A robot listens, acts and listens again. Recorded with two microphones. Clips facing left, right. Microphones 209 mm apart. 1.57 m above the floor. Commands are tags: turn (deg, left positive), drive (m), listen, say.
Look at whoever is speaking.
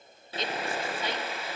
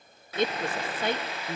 <turn deg="-55"/>
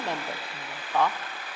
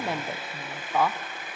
<say>Facing the woman speaking, under 1 m away.</say>